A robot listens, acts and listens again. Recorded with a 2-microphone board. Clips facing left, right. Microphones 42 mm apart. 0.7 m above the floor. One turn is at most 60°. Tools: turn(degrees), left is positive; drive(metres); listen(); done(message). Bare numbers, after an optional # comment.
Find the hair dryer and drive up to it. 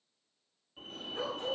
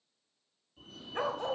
listen()
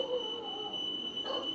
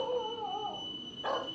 listen()
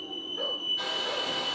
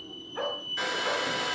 turn(-60)
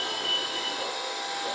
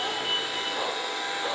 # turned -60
# So it is at 30° right.
turn(-30)
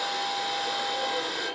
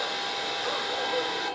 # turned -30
drive(1.0)
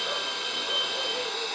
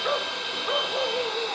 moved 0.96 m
# The hair dryer is now 10° right.
turn(-10)
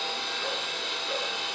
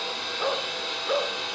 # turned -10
drive(1.0)
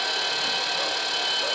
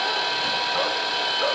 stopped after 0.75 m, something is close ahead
# The hair dryer is now 10° right.
turn(-10)
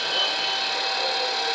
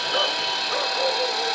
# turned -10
done("I am next to the hair dryer.")